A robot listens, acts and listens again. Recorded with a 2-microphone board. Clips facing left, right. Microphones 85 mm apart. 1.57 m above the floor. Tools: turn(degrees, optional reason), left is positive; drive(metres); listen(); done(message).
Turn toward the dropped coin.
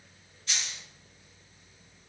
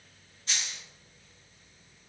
turn(degrees=-30, reason="The dropped coin: about 30° right or 150° right.")
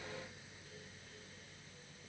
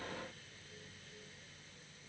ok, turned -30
listen()
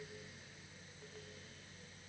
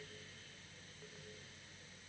done("I heard a dropped coin, but can't make it out now. It was about straight ahead or 120° right.")